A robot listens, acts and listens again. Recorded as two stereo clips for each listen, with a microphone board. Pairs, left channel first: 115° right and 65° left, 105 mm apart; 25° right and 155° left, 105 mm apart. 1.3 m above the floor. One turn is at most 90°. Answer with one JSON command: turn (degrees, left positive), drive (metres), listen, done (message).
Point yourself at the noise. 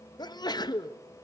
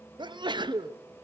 {"turn": -90}
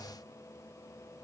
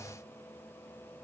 {"turn": -70}
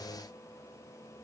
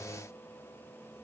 {"done": "Facing where the sneeze came from. I can't hear it now."}